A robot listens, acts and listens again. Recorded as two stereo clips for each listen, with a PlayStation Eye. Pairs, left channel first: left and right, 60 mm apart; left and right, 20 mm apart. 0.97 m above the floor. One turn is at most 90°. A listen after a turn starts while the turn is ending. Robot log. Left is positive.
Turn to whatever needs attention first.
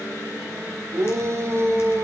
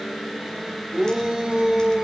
note: The shout: about 50° right or 130° right.
cmd yaw -50
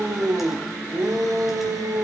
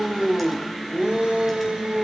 note: So it is at 80° right.
cmd yaw -80
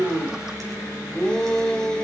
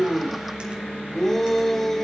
note: The shout is now 15° left.
cmd yaw +15
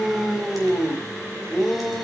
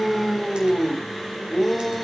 end: Facing the shout, over 4 m away.